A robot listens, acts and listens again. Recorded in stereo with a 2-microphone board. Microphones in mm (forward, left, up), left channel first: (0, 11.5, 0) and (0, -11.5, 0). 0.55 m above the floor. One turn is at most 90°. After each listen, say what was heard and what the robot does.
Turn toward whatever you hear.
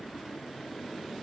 Keep listening.
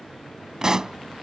The pop: about 30° right or 150° right. Turn 30° right.
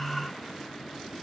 Keep listening.
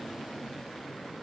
I heard a pop, but can't make it out now. It was about straight ahead or 120° right.